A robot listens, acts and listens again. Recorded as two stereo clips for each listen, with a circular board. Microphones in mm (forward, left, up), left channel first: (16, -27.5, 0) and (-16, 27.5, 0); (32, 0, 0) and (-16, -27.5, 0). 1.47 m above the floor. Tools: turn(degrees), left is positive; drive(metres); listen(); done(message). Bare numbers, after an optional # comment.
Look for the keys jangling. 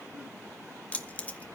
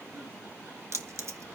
# The keys jangling: 125° right.
turn(-125)
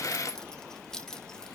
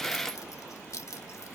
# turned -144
# The keys jangling is now 20° left.
turn(20)
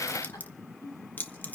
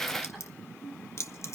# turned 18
done("Facing the keys jangling, 1 to 2 m away.")